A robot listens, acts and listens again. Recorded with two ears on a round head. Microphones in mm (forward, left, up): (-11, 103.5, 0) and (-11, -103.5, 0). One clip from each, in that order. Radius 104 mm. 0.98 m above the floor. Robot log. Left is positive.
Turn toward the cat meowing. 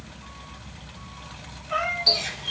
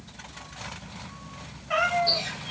note: The cat meowing: about 50° right or 130° right.
cmd yaw -50
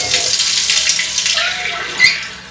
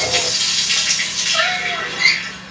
cmd idle
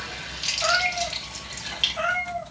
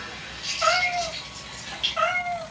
note: So it is at 75° right.
cmd yaw -75
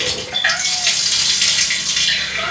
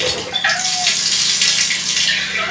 cmd idle
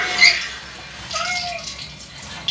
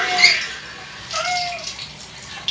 note: The cat meowing is now 30° right.
cmd yaw -30
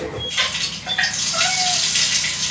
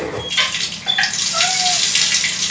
cmd idle
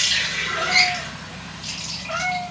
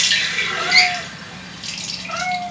end: Found it: a cat meowing, straight ahead.